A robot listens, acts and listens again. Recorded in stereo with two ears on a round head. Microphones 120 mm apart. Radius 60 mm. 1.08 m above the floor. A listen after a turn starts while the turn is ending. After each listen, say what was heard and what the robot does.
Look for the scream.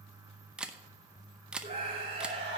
The scream: about 40° right or 140° right. Turn 40° right.
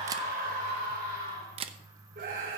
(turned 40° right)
So it is at 100° right. Turn 100° right.
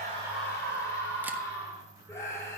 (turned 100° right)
The scream is now 20° left. Turn 20° left.
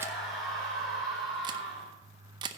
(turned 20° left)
Found it: a scream, straight ahead, over 4 m away.